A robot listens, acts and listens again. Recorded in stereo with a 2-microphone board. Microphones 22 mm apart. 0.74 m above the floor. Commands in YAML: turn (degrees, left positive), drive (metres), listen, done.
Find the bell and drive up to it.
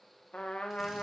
listen: true
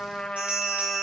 turn: -60
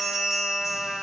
drive: 1.0
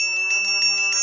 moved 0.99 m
drive: 1.0
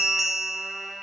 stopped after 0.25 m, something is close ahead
done: "I am next to the bell."